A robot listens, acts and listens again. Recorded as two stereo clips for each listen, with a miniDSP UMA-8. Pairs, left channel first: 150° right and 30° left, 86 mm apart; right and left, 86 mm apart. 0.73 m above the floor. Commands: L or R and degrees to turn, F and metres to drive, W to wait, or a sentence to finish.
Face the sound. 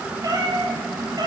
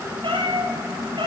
L70
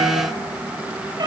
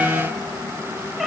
Found it: a cat meowing, straight ahead, 2 to 4 m away.